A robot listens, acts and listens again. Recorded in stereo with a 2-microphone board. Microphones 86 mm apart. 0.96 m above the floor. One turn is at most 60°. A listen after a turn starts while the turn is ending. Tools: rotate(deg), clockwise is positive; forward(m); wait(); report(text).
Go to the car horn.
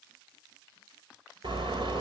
rotate(60)
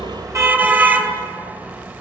rotate(20)
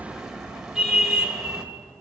forward(1.0)
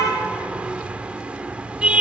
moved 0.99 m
rotate(15)
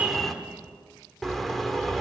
forward(1.0)
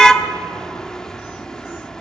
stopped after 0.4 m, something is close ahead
rotate(-10)
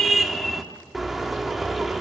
report("Arrived at the car horn, straight ahead.")